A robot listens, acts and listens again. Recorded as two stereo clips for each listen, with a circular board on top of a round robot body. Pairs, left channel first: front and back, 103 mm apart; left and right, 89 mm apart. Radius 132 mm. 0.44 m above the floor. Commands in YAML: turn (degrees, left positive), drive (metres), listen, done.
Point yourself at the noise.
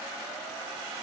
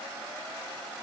listen: true
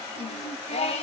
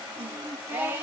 turn: -20
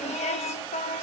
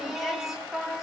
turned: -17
done: "Facing the singing, 1 to 2 m away."